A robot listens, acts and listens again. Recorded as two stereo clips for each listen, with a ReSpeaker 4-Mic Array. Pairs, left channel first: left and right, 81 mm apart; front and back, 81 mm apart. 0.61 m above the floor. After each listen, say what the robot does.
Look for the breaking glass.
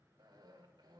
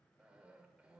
Keep listening.
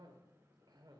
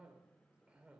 Keep listening.
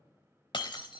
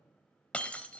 Turn 75° left.
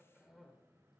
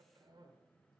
I heard breaking glass from this way, but can't make it out now.